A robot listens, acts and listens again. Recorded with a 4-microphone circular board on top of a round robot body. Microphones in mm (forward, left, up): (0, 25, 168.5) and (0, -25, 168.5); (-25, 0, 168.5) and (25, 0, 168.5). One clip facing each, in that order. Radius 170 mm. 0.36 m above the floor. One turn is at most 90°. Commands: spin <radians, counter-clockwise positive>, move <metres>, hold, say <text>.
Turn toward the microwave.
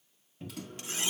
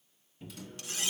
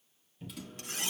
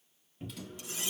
spin 1.57
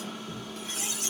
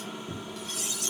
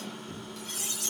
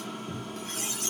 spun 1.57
spin -0.35
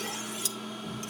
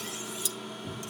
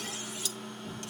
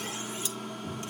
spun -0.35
say Facing the microwave, 2 to 4 m away.